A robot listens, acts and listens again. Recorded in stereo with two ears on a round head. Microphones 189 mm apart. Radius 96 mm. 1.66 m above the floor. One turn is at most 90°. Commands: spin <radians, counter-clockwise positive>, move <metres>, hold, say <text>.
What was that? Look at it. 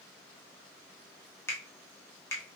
spin 0.52
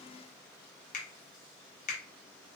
spin 1.57
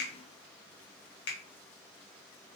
spin 0.96
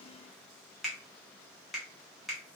say Facing the finger snap.